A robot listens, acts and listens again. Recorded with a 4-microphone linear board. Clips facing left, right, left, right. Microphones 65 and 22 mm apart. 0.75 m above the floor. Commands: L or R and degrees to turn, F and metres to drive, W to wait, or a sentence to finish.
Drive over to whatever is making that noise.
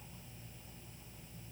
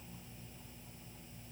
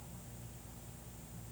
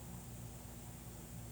W
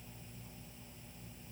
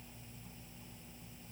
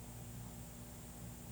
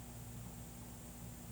W
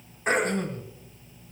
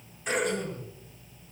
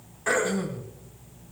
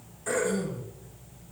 L40
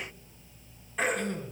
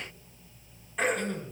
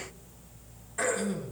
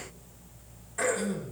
F1.0
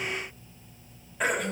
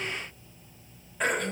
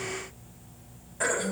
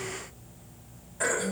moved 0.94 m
F1.0
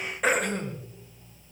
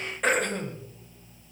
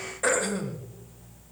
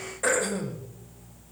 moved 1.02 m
F1.0
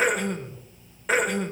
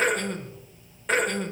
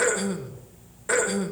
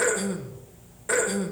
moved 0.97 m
F1.0
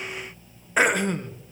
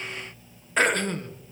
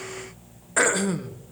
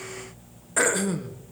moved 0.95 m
L15
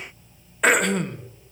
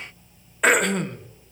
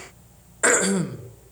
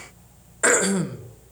F1.0
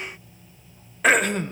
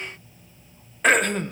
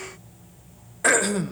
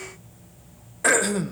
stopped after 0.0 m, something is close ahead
I am next to the throat clearing.